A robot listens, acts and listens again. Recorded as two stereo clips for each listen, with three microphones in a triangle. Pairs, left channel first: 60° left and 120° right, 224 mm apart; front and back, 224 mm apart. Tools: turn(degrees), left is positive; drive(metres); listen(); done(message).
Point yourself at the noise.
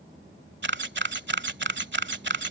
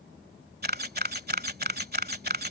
turn(degrees=-145)
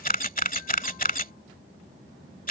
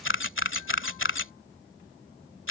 turn(degrees=10)
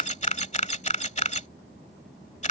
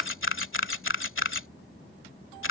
done("Found it: a camera shutter, straight ahead.")